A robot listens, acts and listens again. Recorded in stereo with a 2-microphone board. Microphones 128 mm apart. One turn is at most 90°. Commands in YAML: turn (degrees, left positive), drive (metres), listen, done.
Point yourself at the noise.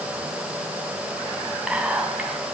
turn: -30
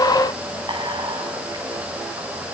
turn: -90
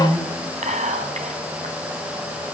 turn: -80
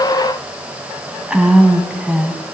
turn: -10
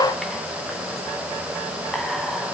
listen: true
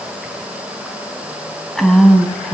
done: "Found it: whispering, straight ahead."